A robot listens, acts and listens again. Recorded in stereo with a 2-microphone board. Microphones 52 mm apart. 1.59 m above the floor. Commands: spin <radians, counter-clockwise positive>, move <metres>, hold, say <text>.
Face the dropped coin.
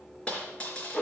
spin 0.35
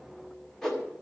hold
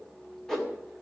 say I heard a dropped coin, but can't make it out now. It was about straight ahead or 140° left.